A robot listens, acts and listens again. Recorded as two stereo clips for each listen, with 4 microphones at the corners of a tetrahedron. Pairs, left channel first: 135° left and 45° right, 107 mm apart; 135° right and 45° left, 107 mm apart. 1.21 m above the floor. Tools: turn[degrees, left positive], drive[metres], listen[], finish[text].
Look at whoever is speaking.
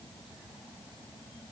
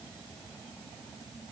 Action: listen[]
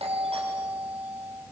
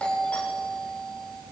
Action: listen[]
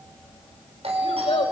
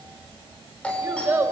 Thought: The child speaking: 115° left.
Action: turn[115]
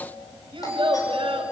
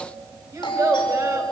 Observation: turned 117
Thought: The child speaking is now 10° right.
Action: turn[-10]
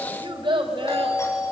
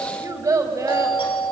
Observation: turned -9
Thought: The child speaking is now 10° right.
Action: turn[-10]
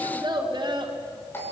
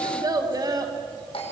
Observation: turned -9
Action: finish[Facing the child speaking, over 4 m away.]